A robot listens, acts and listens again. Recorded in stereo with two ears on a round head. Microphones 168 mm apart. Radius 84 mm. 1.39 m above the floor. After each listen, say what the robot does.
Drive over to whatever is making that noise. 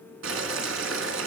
Turn 90° right.
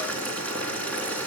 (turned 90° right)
Turn 10° left.
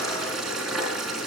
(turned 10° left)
Drive 1.0 m forward.
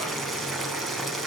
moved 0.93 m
Drive 1.0 m forward.
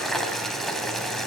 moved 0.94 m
Drive 1.0 m forward.
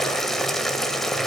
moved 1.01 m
Drive 1.0 m forward.
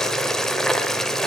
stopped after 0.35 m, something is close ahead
I am next to the boiling.